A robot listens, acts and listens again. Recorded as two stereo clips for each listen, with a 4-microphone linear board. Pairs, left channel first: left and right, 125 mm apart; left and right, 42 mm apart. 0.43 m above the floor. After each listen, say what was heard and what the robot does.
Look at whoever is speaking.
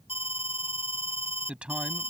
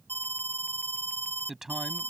Turn 30° right.
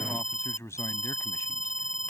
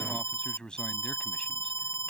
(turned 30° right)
So it is at 20° left. Turn 20° left.
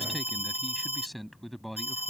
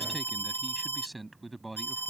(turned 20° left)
Facing the man speaking.